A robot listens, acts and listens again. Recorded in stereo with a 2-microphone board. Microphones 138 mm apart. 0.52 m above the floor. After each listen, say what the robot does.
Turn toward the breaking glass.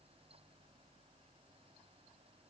Keep listening.
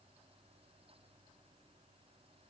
Keep listening.
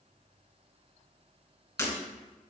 Turn 25° left.
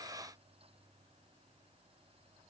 Keep listening.
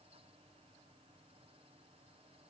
I heard breaking glass, but can't make it out now. It was about straight ahead or 130° left.